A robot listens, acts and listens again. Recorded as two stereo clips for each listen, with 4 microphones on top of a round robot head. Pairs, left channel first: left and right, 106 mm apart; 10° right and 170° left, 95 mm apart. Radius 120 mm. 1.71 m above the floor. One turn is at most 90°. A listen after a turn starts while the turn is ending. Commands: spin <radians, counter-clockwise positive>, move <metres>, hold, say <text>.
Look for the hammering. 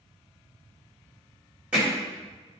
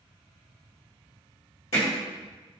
spin -0.17
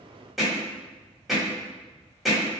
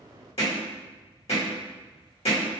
say Facing the hammering, 1 to 2 m away.